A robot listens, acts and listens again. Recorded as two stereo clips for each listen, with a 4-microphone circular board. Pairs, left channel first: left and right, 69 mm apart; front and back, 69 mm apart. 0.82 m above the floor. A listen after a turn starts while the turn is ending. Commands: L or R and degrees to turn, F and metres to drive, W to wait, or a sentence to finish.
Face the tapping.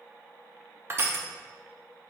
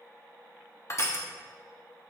W
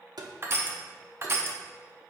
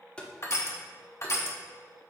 R70
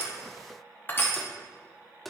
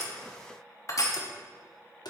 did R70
Facing the tapping.